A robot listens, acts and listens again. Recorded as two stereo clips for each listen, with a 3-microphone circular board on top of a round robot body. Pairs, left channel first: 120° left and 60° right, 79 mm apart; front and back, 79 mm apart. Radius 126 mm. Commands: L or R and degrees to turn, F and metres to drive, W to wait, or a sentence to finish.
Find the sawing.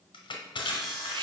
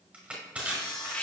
L30
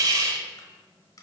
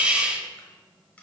W
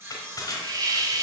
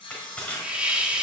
Facing the sawing.